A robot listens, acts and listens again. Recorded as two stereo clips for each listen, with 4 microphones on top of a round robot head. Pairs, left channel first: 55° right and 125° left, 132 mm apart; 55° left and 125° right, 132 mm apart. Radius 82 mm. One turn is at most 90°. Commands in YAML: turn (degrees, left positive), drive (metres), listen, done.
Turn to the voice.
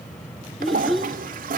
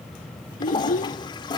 turn: 35
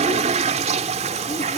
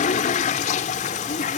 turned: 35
listen: true
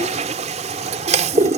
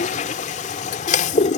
listen: true
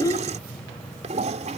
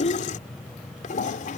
turn: 10
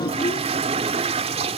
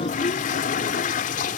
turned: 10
listen: true
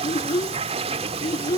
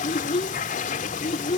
done: "Facing the child speaking."